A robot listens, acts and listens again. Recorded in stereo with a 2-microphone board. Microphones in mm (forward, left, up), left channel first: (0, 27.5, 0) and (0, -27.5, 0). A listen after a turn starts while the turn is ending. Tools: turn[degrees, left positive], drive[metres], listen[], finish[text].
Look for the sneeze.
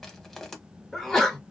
Action: turn[30]
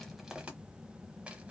Action: listen[]
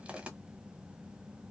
Action: finish[I heard a sneeze, but can't make it out now. It was about 25° right or 145° left.]